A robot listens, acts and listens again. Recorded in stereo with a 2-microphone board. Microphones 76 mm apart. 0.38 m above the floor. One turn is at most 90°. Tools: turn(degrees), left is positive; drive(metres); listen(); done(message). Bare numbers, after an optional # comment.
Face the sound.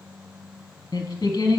# The singing: about 65° left or 115° left.
turn(65)
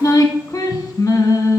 # So it is at 50° left.
turn(50)
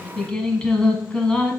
# The singing is now 15° left.
turn(15)
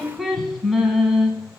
done("Found it: singing, straight ahead, under 1 m away.")